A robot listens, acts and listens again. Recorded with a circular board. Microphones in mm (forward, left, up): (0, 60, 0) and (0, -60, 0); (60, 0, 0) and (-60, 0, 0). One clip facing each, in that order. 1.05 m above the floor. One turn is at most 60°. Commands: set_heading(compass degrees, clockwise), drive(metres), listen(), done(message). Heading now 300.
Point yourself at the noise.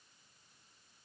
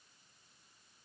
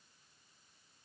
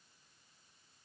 listen()
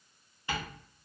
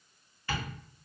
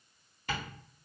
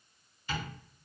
set_heading(280)
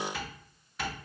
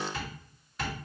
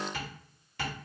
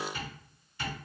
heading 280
done("Facing the tapping.")